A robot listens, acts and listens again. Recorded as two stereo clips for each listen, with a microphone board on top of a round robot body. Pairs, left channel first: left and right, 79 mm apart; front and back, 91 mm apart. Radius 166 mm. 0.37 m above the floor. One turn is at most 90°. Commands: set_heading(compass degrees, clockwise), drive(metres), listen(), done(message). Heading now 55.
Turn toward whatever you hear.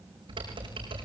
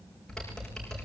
set_heading(140)
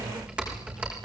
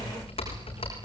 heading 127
set_heading(142)
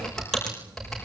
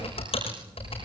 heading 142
done("Found it: typing on a keyboard, straight ahead, over 4 m away.")